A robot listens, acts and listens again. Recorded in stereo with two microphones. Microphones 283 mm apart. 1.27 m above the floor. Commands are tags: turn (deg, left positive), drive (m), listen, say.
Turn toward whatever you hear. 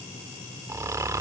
<turn deg="-30"/>
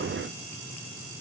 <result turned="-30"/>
<listen/>
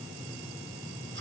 <listen/>
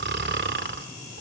<turn deg="-140"/>
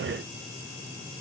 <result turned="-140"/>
<listen/>
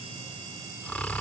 <say>Found it: snoring, straight ahead.</say>